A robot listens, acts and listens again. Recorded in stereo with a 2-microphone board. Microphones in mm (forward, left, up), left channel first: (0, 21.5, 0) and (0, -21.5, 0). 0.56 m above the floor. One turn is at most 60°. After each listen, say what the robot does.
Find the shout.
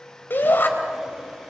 Turn 50° left.
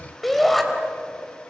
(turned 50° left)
Facing the shout.